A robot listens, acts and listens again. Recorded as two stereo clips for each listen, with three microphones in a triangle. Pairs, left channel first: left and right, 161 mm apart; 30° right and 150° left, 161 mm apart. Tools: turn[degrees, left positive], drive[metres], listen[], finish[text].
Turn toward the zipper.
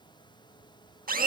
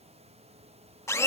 Action: listen[]
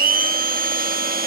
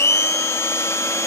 Action: listen[]
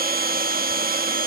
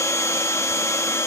Action: finish[I can't make out a zipper to turn to.]